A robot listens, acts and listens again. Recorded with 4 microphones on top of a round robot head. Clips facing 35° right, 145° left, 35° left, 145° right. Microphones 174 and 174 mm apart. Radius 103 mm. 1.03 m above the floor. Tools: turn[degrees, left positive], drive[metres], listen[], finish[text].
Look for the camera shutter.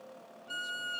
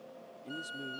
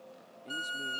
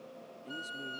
Action: listen[]
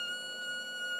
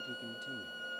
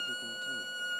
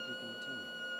Action: listen[]
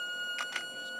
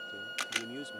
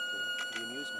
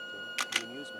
Thought: The camera shutter: 155° right.
Action: turn[-155]
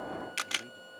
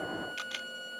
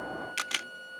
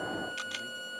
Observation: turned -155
Action: finish[Found it: a camera shutter, straight ahead.]